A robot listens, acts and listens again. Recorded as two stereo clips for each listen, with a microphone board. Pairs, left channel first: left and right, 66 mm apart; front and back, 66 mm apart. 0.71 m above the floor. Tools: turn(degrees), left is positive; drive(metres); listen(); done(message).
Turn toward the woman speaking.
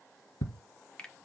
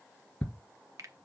listen()
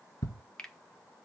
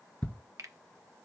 listen()
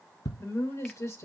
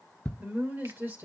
turn(degrees=125)
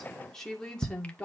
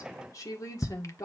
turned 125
turn(degrees=20)
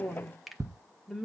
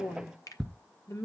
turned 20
done("Facing the woman speaking, 2 to 4 m away.")